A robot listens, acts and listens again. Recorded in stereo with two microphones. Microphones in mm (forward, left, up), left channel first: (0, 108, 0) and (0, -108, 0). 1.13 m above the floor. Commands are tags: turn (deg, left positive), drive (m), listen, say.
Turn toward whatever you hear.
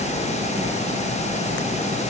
<listen/>
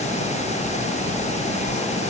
<listen/>
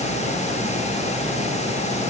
<say>I can't make out anything.</say>